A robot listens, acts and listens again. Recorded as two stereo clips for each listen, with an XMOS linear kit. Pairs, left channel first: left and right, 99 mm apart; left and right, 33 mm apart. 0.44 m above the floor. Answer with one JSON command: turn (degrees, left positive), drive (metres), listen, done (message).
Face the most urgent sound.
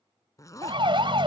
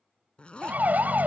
{"turn": -50}
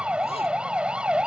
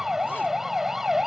{"turn": -10}
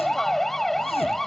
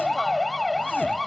{"done": "Facing the siren."}